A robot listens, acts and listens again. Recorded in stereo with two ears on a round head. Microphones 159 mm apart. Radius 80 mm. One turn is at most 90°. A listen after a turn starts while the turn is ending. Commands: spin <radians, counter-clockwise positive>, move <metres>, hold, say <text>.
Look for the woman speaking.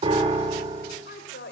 spin 1.13
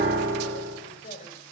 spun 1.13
spin 0.70
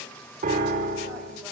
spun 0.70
hold
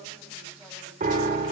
hold
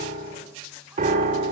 say I heard a woman speaking from this way, but can't make it out now.